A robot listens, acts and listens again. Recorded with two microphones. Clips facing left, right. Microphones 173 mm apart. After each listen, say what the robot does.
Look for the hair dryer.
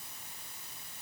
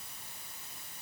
Keep listening.
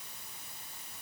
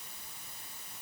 Keep listening.
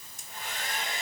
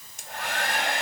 Turn 70° right.
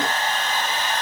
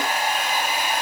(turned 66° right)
Turn 10° right.
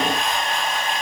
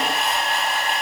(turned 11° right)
Found it: a hair dryer, straight ahead.